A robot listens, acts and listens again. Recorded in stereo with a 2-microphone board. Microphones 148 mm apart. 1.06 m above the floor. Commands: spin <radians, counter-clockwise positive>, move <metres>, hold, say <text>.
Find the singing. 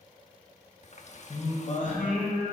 spin 1.13
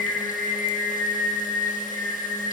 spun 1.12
spin 0.26
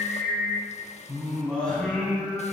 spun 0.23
say Facing the singing.